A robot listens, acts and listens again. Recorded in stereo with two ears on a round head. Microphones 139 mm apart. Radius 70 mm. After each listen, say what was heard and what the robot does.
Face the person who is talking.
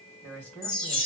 Turn 30° left.
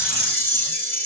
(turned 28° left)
Keep listening.
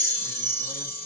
Keep listening.
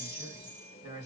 So it is at 20° right. Turn 20° right.
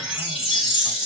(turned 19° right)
Keep listening.
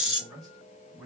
Facing the man speaking, 2 to 4 m away.